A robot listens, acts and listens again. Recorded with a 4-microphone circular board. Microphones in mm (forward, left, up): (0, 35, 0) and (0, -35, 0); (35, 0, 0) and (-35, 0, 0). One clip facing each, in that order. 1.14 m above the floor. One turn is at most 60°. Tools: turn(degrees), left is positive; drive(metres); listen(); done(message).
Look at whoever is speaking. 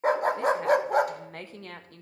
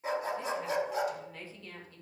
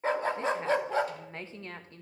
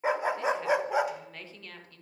turn(degrees=60)
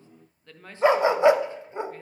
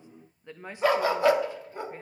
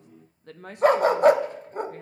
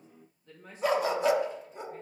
turn(degrees=-20)
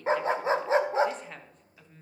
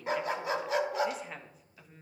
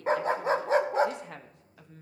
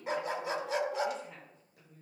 done("Found it: a woman speaking, straight ahead, 1 to 2 m away.")